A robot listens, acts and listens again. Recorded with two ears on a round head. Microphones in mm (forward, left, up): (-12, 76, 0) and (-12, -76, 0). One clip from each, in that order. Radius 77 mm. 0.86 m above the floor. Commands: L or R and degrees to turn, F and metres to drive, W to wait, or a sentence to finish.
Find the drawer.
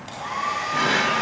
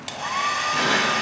L30
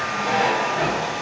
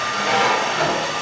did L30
R35
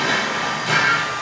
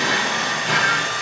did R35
Found it: a drawer, straight ahead.